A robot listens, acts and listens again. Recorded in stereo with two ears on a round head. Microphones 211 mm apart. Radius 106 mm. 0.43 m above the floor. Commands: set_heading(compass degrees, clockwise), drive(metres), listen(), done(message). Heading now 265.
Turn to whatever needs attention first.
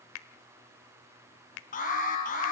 set_heading(230)
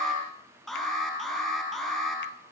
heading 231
done("Facing the alarm, over 4 m away.")